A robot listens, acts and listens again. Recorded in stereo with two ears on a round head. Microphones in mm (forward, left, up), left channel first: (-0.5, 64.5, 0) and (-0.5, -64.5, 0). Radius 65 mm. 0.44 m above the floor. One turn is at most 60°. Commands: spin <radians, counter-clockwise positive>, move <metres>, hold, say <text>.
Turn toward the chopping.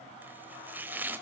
spin -0.52
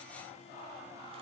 hold
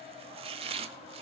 spin -1.05
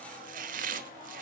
spin -1.05
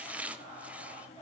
spin -0.17
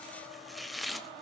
say Facing the chopping.